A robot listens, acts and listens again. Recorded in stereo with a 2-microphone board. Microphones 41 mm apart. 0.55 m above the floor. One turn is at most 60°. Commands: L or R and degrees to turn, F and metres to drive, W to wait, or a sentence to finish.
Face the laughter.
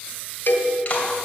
W
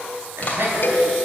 R60
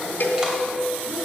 R35
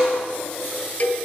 W
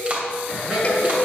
R15
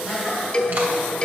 Found it: laughter, straight ahead, over 4 m away.